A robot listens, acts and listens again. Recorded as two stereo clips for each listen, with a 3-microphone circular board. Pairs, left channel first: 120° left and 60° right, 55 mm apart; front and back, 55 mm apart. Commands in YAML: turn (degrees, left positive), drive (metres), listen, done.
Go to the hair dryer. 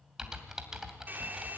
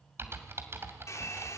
turn: -10
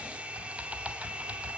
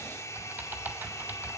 drive: 1.0
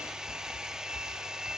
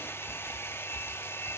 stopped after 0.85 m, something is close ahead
turn: 15
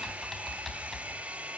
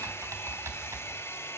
done: "I am next to the hair dryer."